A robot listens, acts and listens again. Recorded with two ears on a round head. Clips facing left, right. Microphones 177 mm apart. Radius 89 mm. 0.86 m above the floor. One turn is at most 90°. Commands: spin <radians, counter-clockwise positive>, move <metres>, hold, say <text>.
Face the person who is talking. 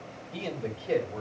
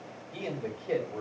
spin 0.52
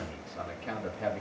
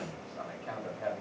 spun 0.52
spin 1.57
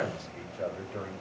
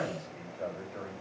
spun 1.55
spin 0.79
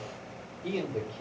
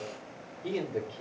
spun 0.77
say Facing the man speaking, 2 to 4 m away.